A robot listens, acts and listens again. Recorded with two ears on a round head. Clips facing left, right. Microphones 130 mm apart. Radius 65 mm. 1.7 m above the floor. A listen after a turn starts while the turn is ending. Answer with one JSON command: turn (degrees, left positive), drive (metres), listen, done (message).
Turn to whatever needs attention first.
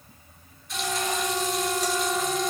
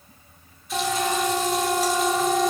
{"turn": -50}
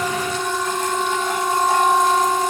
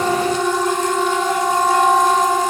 {"turn": -80}
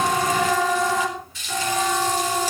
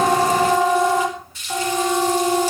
{"turn": -20}
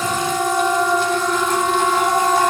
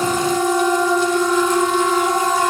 {"done": "Facing the siren."}